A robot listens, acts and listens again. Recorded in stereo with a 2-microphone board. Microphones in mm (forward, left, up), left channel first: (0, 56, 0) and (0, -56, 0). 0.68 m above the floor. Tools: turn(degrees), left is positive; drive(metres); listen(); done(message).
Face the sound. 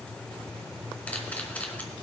turn(degrees=30)
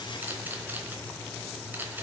turn(degrees=-15)
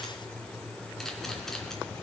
listen()
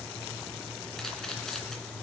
listen()
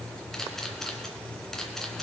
done("Found it: a camera shutter, straight ahead, 2 to 4 m away.")